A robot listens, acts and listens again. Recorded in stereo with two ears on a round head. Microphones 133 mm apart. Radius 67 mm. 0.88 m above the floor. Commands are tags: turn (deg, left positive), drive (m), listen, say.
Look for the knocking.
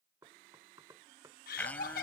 <turn deg="-25"/>
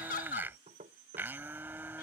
<turn deg="-130"/>
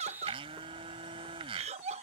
<listen/>
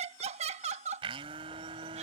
<listen/>
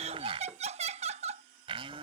<say>Facing where the knocking came from. I can't hear it now.</say>